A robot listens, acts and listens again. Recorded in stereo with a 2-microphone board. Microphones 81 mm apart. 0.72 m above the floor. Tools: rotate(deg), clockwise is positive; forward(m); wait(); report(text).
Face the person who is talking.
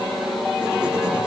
wait()
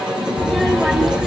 rotate(30)
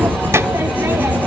rotate(145)
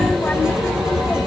rotate(-20)
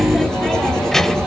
report("Found it: a child speaking, straight ahead.")